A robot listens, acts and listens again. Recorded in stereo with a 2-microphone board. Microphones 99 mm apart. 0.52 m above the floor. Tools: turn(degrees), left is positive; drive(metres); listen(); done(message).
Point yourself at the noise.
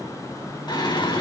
turn(degrees=50)
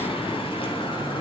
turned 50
turn(degrees=60)
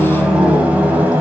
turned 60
turn(degrees=-15)
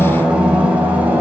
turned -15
turn(degrees=-15)
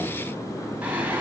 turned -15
turn(degrees=-15)
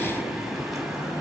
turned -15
listen()
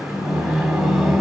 done("Facing the singing.")